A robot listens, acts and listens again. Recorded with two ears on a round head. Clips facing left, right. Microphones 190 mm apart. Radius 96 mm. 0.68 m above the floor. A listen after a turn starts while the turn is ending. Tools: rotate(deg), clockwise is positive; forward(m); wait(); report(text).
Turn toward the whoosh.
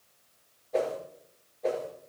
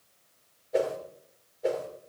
rotate(30)
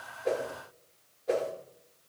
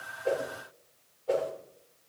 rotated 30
rotate(-25)
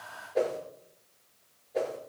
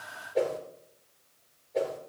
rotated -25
report("Found it: a whoosh, straight ahead, 2 to 4 m away.")